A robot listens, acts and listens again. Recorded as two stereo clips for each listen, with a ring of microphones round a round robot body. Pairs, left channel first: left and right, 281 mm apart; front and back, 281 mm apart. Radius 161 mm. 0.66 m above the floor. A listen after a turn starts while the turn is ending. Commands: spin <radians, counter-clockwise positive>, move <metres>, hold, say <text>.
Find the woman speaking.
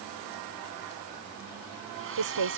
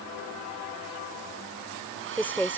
spin -1.48
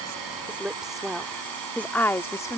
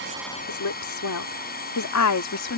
spin 0.26
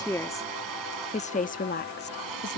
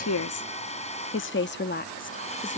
spin 0.79
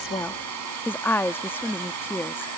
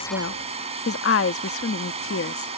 spin 0.17
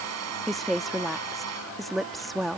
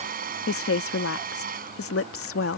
say Found it: a woman speaking, straight ahead.